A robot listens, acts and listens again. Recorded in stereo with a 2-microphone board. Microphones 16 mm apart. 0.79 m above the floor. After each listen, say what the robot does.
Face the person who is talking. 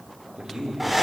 Turn 90° right.
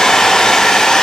Keep listening.
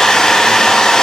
Keep listening.
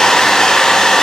I heard a man speaking from this way, but can't make it out now.